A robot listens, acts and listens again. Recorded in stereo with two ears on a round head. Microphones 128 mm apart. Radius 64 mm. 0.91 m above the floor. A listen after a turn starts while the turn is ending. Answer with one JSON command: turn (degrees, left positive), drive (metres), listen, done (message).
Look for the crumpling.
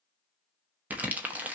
{"turn": -30}
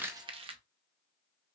{"turn": -135}
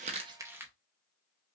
{"turn": -15}
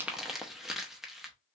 {"done": "Facing the crumpling, under 1 m away."}